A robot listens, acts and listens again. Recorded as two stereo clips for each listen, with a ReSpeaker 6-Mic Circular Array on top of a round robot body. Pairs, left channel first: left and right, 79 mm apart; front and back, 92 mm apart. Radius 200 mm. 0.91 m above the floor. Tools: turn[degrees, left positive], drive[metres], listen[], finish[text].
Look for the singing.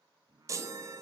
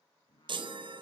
Thought: The singing: 45° right.
Action: turn[-45]
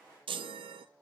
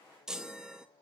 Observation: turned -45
Action: finish[Facing the singing, 2 to 4 m away.]